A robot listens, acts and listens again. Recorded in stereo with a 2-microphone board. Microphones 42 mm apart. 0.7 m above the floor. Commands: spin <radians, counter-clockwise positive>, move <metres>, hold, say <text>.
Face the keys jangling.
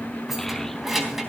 spin -0.52
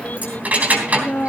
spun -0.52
spin -2.53
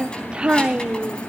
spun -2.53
hold
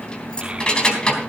spin 0.35
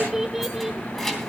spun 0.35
say Found it: keys jangling, straight ahead.